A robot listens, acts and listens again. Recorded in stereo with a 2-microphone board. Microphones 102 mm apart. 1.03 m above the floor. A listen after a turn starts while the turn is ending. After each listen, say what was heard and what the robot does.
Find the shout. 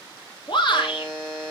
The shout: about 55° left or 125° left. Turn 55° left.
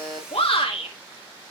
So it is at 70° left. Turn 70° left.
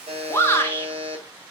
The shout is now 25° left. Turn 25° left.
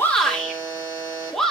Facing the shout, 2 to 4 m away.